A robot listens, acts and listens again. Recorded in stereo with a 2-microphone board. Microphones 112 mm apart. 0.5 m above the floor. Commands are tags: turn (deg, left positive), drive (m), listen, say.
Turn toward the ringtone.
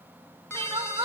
<turn deg="25"/>
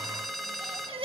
<say>Facing the ringtone.</say>